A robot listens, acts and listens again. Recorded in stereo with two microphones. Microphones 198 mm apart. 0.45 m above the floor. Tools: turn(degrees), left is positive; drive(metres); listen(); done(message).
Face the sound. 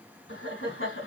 turn(degrees=75)
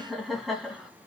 done("Found it: laughter, straight ahead, 2 to 4 m away.")